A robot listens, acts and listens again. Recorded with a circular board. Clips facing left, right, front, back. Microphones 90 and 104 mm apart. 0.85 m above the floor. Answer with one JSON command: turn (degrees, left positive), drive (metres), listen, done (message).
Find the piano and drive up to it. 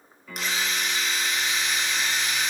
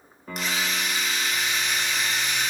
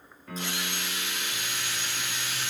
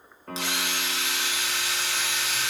{"turn": -140}
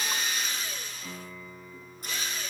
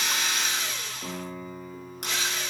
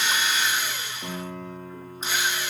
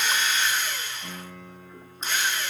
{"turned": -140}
{"turn": -45}
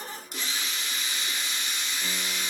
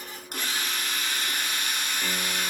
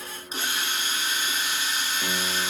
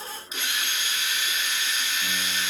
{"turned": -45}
{"listen": true}
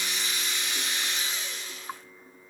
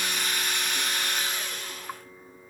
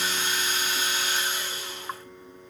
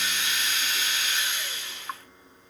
{"turn": -15}
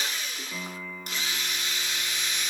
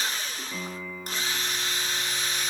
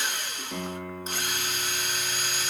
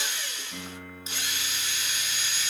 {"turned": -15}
{"drive": 1.0}
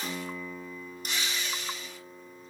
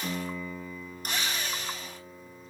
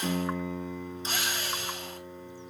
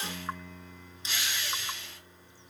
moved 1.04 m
{"drive": 1.0}
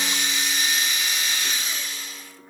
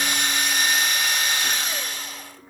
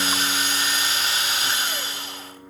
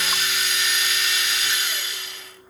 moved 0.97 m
{"turn": 10}
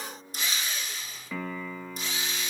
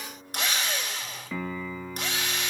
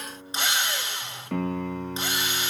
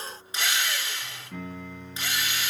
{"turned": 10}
{"drive": 1.0}
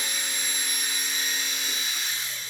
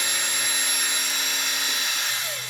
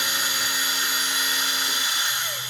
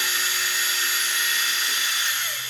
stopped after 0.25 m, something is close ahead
{"listen": true}
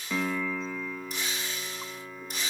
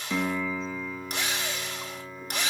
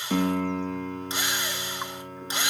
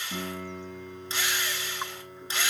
{"done": "Arrived at the piano, straight ahead."}